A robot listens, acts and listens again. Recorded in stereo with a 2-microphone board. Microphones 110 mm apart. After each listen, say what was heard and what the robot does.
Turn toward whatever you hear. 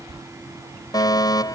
The fire alarm: about 35° left or 145° left. Turn 35° left.
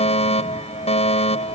So it is at 110° left. Turn 110° left.
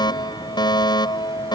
The fire alarm is now 40° left. Turn 40° left.
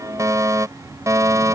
The fire alarm is now 30° right. Turn 30° right.
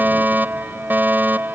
The fire alarm is now 15° right. Turn 15° right.
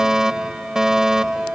Facing the fire alarm.